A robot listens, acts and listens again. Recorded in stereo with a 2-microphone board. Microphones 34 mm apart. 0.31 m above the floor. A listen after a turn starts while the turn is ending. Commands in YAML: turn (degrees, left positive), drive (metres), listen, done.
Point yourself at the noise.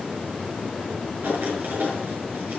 turn: -70
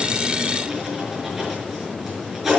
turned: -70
turn: -10
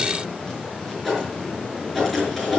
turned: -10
done: "Facing the writing."